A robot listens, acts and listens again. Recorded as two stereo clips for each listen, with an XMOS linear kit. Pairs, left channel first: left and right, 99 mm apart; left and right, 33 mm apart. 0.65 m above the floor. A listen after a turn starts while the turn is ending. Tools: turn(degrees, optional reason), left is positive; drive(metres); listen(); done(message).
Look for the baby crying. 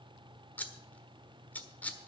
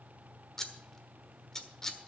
listen()
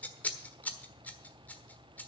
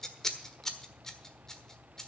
listen()
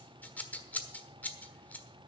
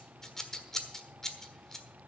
done("I can't make out a baby crying to turn to.")